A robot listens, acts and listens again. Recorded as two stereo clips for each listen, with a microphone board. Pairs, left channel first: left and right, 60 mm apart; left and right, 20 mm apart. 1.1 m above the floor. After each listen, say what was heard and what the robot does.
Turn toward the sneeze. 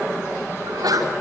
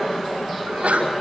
Turn 90° right.
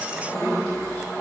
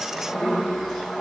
I heard a sneeze from this way, but can't make it out now.